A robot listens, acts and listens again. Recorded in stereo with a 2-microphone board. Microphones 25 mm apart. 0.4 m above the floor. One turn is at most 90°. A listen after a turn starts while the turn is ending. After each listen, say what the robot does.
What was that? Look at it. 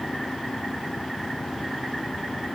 Keep listening.
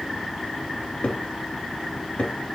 Turn 70° left.
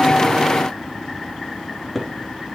Facing the cupboard door.